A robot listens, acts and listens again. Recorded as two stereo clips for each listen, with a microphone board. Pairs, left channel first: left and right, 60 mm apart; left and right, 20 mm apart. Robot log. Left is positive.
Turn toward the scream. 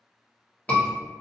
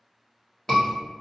note: The scream: about 25° left or 155° left.
cmd yaw +25
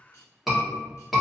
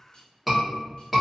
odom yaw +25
end: Found it: a scream, straight ahead, 1 to 2 m away.